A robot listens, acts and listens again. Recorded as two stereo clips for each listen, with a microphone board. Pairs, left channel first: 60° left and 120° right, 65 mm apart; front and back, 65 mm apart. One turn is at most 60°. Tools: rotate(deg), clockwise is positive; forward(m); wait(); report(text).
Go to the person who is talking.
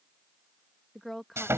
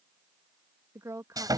rotate(-60)
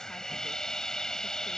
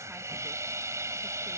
rotate(-60)
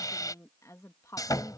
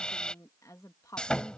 rotate(-30)
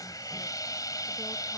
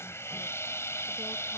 wait()
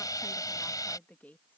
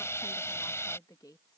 forward(1.0)
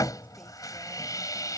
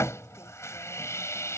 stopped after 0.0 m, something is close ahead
wait()
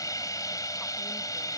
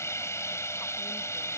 wait()
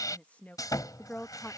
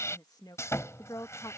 report("Something is in my way. I am facing the woman speaking but have not reached it.")